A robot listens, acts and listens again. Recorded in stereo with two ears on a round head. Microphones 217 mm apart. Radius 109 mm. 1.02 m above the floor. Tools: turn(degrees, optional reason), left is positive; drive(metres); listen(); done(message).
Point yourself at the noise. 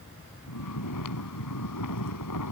turn(degrees=90)
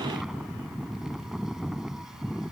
done("Facing the snoring.")